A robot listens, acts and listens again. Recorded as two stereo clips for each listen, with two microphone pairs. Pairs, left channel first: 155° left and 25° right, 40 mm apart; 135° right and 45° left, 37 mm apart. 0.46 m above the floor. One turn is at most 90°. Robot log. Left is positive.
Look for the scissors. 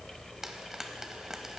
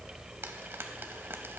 cmd idle
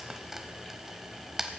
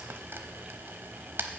cmd idle
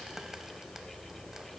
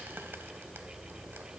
end: I can't make out scissors to turn to.